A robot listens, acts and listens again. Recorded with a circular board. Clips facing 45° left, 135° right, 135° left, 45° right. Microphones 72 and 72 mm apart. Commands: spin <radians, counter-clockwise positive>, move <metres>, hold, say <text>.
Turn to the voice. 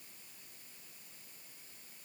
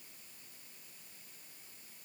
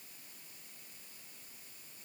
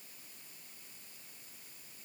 hold
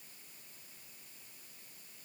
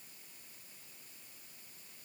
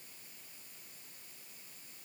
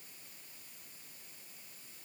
hold
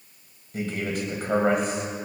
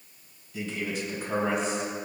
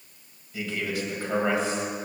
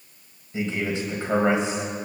spin 0.35
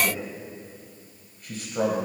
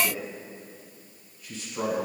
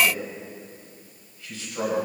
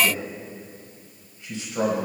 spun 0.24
spin 0.35
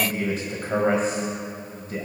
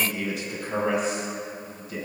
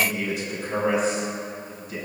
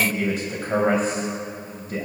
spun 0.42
say Facing the man speaking.